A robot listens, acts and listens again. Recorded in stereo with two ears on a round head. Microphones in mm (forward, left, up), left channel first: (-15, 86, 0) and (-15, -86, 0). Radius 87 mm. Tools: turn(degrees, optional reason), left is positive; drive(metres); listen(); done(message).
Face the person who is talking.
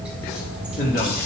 turn(degrees=50, reason="The man speaking: about 50° left or 130° left.")
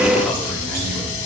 listen()
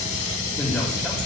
listen()
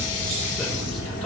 done("I heard a man speaking, but can't make it out now. It was about straight ahead or 80° left.")